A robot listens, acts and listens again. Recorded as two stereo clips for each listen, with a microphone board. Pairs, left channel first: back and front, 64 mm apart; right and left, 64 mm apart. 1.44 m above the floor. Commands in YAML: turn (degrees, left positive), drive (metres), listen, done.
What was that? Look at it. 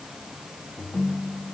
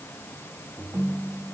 turn: 135
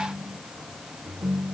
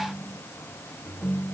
turn: -25
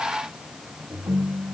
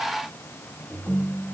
done: "Facing the ringtone."